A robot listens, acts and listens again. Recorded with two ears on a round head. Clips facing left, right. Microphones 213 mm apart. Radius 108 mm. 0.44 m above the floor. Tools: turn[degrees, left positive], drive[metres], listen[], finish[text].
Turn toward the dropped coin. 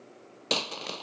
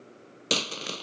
Thought: The dropped coin: about 20° right or 160° right.
Action: turn[-20]
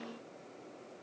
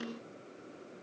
Action: listen[]
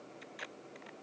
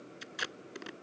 Action: finish[I heard a dropped coin, but can't make it out now. It was about straight ahead or 140° right.]